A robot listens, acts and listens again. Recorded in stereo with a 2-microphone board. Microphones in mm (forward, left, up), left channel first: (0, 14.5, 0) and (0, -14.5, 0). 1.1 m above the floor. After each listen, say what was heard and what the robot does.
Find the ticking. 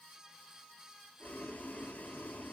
Keep listening.
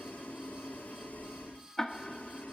The ticking: about 20° left or 160° left. Turn 20° left.
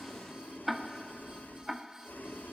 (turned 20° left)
Found it: ticking, straight ahead.